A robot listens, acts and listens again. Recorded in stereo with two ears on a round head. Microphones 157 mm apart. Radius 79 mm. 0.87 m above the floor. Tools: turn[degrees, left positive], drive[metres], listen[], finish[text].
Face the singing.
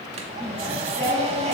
Action: turn[30]
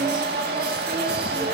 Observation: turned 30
Thought: So it is at 30° right.
Action: turn[-30]
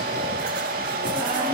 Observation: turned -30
Action: listen[]
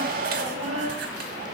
Thought: The singing is now 35° right.
Action: turn[-35]
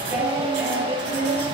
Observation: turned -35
Thought: The singing is now 10° right.
Action: turn[-10]
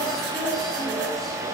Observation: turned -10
Action: finish[Found it: singing, straight ahead.]